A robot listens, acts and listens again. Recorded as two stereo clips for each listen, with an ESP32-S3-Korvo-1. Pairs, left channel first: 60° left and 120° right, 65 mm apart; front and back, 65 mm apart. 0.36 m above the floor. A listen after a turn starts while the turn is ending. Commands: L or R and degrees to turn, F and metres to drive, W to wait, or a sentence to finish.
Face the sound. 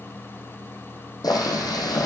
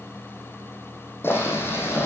L55
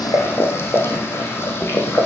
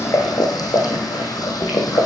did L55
L10
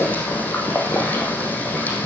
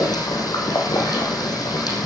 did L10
Facing the boiling, over 4 m away.